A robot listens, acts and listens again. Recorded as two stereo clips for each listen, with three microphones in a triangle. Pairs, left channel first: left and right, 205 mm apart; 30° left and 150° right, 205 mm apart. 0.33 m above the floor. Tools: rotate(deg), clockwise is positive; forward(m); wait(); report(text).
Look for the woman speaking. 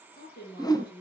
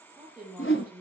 rotate(-125)
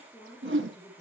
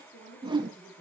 rotate(-25)
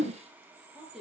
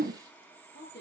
report("Found it: a woman speaking, straight ahead.")